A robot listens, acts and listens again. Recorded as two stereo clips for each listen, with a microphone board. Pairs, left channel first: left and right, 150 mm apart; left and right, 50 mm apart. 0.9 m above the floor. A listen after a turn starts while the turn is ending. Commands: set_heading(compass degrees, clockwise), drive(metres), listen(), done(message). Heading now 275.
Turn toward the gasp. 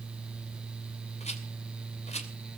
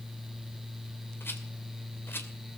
listen()
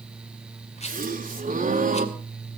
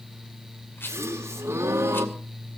set_heading(345)
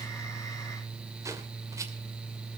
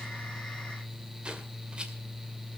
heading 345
listen()
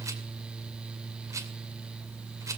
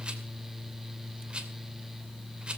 done("I heard a gasp, but can't make it out now. It was about straight ahead or 40° right.")